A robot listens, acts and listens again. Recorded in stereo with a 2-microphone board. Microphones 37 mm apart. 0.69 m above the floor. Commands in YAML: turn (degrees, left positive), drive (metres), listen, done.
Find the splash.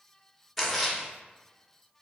turn: 30
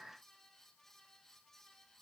listen: true
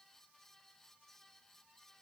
done: "I heard a splash, but can't make it out now. It was about 25° right or 145° left."